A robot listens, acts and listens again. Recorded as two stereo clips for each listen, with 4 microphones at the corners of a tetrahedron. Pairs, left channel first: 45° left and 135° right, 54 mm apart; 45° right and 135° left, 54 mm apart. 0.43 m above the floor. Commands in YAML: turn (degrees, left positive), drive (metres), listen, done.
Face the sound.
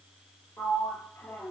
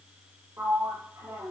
turn: 90
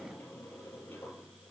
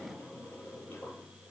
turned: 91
done: "Found it: a sliding door, straight ahead."